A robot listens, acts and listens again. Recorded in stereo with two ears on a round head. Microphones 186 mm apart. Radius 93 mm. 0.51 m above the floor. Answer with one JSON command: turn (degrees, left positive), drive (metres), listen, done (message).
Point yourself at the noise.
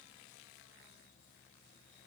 {"listen": true}
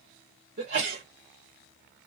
{"turn": -55}
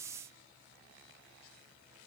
{"listen": true}
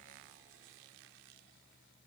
{"done": "I heard a sneeze, but can't make it out now. It was about straight ahead or 70° right."}